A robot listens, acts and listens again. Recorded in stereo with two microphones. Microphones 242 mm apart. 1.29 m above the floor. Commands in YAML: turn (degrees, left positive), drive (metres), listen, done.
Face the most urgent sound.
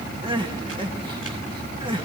turn: -20
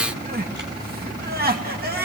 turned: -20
turn: -140
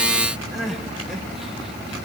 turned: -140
done: "Facing the crying."